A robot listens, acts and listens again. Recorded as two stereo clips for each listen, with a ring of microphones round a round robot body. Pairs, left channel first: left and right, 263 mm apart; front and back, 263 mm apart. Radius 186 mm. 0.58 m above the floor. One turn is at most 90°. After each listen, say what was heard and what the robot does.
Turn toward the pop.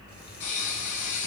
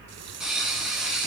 The pop: 90° left. Turn 90° left.
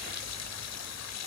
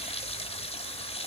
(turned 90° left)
I heard a pop from this way, but can't make it out now.